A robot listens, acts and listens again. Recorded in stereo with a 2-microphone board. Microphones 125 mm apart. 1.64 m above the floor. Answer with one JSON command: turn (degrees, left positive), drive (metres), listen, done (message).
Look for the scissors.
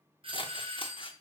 {"turn": 45}
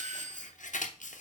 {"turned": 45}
{"turn": 90}
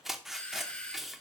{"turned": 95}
{"done": "Facing the scissors, under 1 m away."}